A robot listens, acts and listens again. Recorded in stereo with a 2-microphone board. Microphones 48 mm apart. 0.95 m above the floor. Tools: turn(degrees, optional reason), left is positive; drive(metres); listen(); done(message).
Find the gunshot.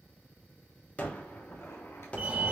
turn(degrees=30, reason="The gunshot: about 30° left or 150° left.")
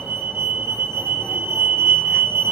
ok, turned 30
listen()
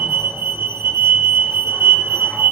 done("I heard a gunshot, but can't make it out now. It was about straight ahead or 120° left.")